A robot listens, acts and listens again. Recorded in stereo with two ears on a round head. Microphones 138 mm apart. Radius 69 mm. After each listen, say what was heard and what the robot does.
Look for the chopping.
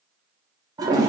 Keep listening.
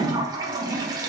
Keep listening.
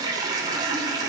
I can't make out chopping, only a toilet flushing.